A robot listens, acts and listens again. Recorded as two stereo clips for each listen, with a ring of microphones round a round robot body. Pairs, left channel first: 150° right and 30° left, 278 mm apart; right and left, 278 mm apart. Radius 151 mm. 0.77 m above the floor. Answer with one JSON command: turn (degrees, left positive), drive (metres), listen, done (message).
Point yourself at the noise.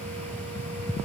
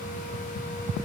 {"listen": true}
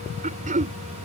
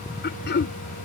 {"turn": -35}
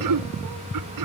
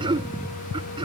{"turn": 15}
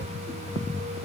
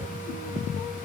{"listen": true}
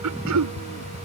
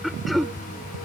{"done": "Facing the throat clearing."}